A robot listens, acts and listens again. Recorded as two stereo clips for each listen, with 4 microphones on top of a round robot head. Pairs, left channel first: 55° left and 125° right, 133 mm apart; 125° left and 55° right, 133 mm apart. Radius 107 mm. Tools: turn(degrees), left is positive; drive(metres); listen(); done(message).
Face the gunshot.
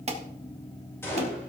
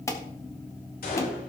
turn(degrees=125)
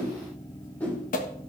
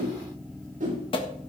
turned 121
done("I heard a gunshot from this way, but can't make it out now.")